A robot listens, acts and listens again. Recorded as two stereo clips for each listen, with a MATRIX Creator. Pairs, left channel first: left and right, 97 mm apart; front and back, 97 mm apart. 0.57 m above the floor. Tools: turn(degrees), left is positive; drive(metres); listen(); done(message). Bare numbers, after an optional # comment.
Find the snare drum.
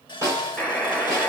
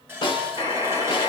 # The snare drum: 30° right.
turn(-30)
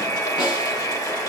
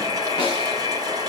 listen()
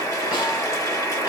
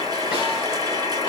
listen()
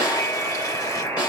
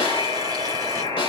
done("I heard a snare drum from this way, but can't make it out now.")